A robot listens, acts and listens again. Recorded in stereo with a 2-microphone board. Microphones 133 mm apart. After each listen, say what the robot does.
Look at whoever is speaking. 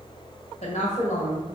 Turn 60° left.
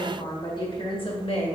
Turn 50° left.
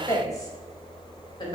Turn 35° left.
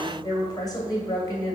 Turn 30° left.
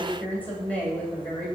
Turn 10° left.
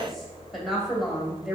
Found it: a woman speaking, straight ahead, 2 to 4 m away.